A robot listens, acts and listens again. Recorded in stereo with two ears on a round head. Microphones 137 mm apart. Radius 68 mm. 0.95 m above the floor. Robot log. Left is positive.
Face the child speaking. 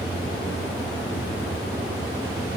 cmd idle
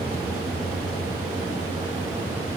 cmd idle
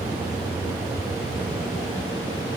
end: I can't make out a child speaking to turn to.